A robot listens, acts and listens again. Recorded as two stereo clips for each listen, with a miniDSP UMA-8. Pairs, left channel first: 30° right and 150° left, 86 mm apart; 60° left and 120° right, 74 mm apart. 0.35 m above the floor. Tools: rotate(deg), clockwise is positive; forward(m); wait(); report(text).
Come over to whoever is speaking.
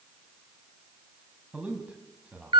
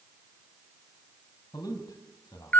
rotate(-75)
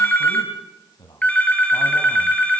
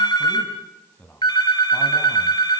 forward(1.0)
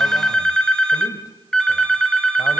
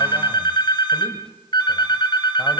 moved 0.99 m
wait()
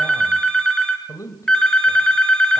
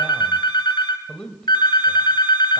rotate(10)
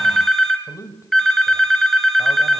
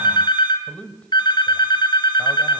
forward(1.0)
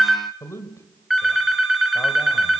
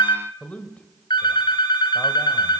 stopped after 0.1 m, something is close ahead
report("I am next to the man speaking.")